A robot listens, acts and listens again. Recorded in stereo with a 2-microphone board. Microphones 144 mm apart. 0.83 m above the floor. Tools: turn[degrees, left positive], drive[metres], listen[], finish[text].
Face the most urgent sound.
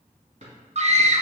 Thought: The scream: about 50° right or 130° right.
Action: turn[-50]
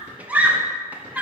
Thought: So it is at 10° right.
Action: turn[-10]
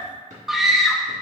Action: finish[Facing the scream, under 1 m away.]